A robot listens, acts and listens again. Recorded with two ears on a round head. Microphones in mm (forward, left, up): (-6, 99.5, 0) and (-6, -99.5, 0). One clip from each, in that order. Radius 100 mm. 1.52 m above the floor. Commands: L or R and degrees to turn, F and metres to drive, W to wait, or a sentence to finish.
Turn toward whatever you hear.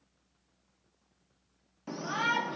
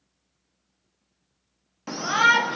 R45
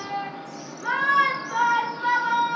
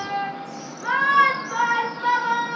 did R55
Found it: a shout, straight ahead.